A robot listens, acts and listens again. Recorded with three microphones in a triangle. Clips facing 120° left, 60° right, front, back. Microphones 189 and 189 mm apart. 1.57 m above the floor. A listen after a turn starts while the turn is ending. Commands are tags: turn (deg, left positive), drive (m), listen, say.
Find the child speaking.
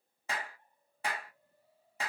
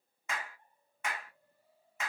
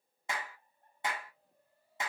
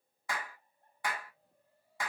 <listen/>
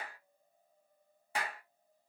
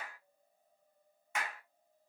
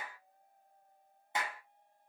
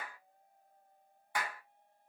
<listen/>
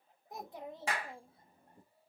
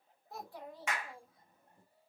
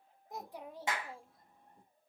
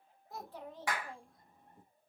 <turn deg="95"/>
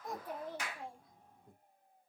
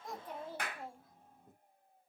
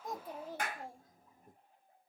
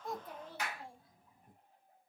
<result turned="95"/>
<turn deg="25"/>
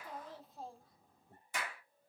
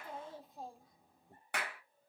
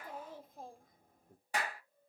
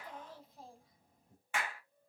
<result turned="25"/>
<turn deg="10"/>
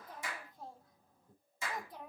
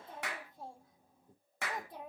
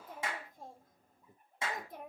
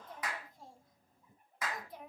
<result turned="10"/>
<say>Found it: a child speaking, straight ahead, 1 to 2 m away.</say>